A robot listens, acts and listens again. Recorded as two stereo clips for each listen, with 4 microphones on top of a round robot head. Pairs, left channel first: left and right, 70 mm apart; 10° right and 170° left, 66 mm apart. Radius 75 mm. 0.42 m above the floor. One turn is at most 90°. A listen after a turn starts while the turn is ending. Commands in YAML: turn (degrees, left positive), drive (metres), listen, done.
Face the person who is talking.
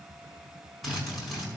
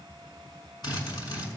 listen: true
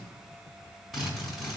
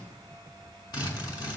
listen: true
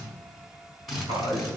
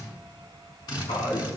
turn: -35
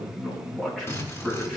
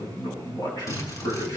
done: "Facing the man speaking, over 4 m away."